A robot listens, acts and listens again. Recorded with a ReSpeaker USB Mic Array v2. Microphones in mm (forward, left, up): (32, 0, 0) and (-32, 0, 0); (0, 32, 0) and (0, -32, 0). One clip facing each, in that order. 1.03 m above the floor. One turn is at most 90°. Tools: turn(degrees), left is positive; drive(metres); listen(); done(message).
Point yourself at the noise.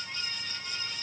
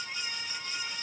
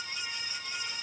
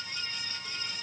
listen()
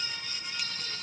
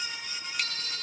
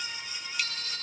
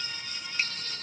turn(degrees=-90)
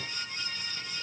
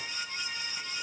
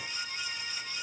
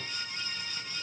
turn(degrees=-55)
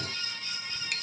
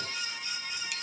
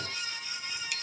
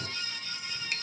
turn(degrees=-40)
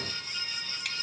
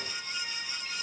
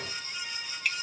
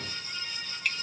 done("Found it: a bicycle bell, straight ahead.")